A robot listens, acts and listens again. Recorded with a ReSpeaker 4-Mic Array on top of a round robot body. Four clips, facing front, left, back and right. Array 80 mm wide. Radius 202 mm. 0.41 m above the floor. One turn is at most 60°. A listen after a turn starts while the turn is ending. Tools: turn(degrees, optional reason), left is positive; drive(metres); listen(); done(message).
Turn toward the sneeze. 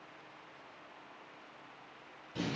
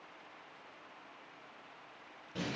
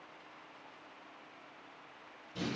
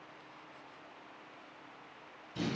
listen()
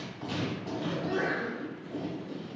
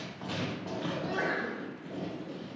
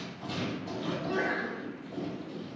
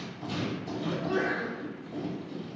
turn(degrees=-60, reason="The sneeze: 90° right.")
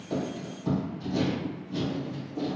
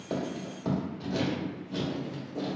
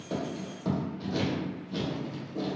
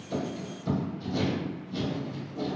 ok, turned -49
turn(degrees=-40, reason="Nothing new. It was at 40° right.")
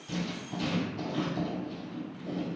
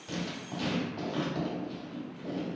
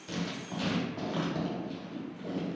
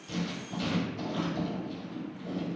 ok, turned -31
turn(degrees=-10, reason="Nothing new. It was at 10° right.")
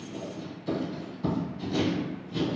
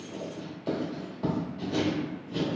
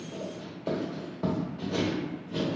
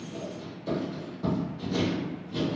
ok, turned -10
done("Facing where the sneeze came from. I can't hear it now.")